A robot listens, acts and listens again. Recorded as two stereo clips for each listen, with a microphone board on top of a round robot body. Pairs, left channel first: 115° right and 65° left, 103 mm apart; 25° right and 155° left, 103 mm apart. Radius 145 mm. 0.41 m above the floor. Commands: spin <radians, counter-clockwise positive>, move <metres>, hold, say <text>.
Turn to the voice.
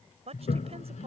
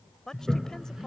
spin 1.05
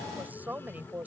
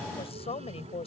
say Found it: a woman speaking, straight ahead.